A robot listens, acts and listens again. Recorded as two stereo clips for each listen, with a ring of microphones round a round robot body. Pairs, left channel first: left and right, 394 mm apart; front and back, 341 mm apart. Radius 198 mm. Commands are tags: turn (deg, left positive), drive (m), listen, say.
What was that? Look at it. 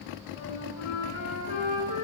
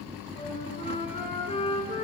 <turn deg="75"/>
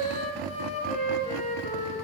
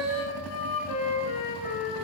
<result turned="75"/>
<turn deg="15"/>
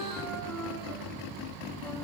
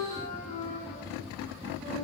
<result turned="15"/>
<say>Facing the flute.</say>